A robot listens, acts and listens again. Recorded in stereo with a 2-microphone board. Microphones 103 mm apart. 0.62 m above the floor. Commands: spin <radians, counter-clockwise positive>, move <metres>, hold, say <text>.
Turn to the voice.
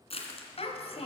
spin 1.22
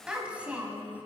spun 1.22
spin -0.26
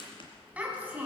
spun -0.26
spin -0.26
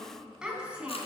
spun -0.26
spin -0.17
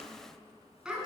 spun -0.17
say Found it: a child speaking, straight ahead.